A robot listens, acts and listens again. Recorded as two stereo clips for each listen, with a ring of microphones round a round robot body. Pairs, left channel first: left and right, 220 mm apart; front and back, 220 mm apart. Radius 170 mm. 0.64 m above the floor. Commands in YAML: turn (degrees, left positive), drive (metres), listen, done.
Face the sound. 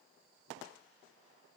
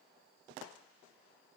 listen: true
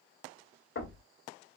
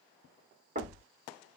turn: 125
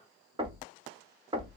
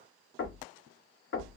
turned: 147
turn: -20
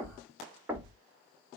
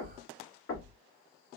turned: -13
turn: -10
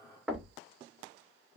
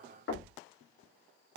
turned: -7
done: "Found it: knocking, straight ahead, 1 to 2 m away."